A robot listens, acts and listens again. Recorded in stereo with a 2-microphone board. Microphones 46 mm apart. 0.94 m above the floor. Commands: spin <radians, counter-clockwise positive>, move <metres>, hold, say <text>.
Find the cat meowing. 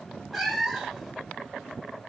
spin 0.52
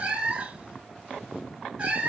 spin -0.52
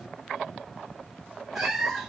say Facing the cat meowing, 1 to 2 m away.